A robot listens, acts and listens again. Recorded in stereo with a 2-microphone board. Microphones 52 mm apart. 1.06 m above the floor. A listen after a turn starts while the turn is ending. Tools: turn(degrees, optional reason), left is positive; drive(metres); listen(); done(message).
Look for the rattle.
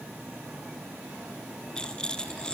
turn(degrees=15, reason="The rattle: about 15° left or 165° left.")
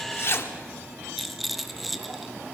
done("Found it: a rattle, straight ahead, under 1 m away.")